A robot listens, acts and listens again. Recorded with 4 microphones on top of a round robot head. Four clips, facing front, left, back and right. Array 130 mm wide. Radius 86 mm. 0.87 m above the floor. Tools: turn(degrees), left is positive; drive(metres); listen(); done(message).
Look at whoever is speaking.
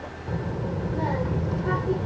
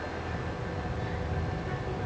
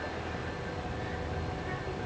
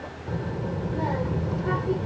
turn(degrees=-45)
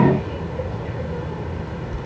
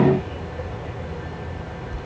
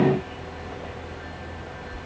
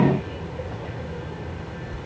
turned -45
done("Found it: a child speaking, straight ahead.")